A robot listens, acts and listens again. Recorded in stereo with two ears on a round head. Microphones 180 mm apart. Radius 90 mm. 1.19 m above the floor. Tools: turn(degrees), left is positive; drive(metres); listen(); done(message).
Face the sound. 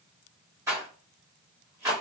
turn(degrees=-30)
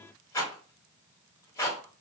turn(degrees=15)
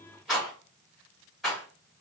done("Facing the rattle, 1 to 2 m away.")